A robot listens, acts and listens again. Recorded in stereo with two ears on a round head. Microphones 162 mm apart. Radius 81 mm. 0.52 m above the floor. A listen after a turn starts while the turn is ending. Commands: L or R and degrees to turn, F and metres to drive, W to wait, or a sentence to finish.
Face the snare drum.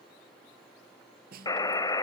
R55
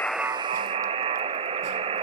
W
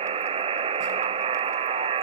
W
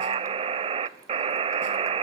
I heard a snare drum, but can't make it out now. It was about straight ahead or 70° right.